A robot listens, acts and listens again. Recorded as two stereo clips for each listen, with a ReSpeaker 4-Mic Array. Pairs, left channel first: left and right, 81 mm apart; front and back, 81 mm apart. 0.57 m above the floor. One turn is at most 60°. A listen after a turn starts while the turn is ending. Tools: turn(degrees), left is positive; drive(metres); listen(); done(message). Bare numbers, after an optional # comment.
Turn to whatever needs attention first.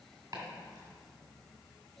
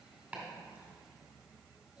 listen()
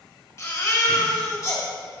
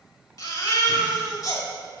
# The baby crying: 40° left.
turn(40)
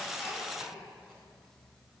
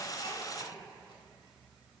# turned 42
listen()
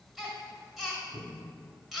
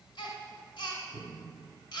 done("Facing the baby crying, 1 to 2 m away.")